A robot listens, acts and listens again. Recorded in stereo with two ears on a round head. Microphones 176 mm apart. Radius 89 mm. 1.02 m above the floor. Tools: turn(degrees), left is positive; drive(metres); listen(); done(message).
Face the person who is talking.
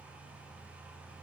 listen()
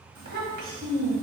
turn(degrees=-50)
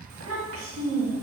turn(degrees=-80)
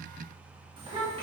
turn(degrees=-30)
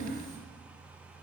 done("Found it: a child speaking, straight ahead, 1 to 2 m away.")